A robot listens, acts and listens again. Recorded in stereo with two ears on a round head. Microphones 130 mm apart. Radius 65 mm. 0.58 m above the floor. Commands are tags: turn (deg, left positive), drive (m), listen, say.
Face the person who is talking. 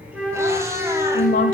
<turn deg="65"/>
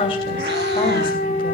<listen/>
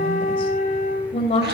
<turn deg="40"/>
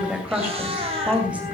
<turn deg="-10"/>
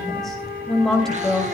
<say>Facing the woman speaking.</say>